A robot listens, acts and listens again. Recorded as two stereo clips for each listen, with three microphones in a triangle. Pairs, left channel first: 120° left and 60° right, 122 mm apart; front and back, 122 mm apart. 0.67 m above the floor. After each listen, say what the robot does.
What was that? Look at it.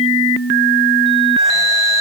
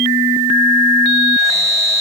Keep listening.
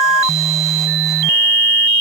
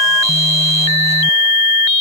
Keep listening.
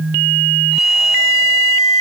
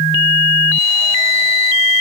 I can't make out anything to turn to.